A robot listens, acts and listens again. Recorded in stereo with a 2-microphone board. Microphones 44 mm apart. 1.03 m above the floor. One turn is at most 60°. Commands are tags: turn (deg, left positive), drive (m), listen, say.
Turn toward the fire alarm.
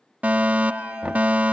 <turn deg="-30"/>
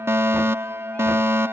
<turn deg="-60"/>
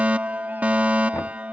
<turn deg="-35"/>
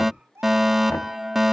<turn deg="-10"/>
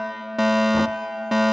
<say>Found it: a fire alarm, straight ahead.</say>